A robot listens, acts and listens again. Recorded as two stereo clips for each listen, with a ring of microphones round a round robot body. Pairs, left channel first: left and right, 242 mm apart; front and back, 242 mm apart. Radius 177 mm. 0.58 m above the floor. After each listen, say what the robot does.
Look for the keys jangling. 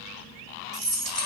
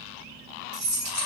Turn 175° right.
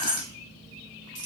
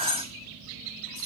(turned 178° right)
Turn 35° right.
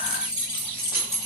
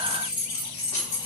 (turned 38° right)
Turn 10° right.
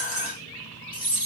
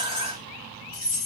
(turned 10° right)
Found it: keys jangling, straight ahead, 2 to 4 m away.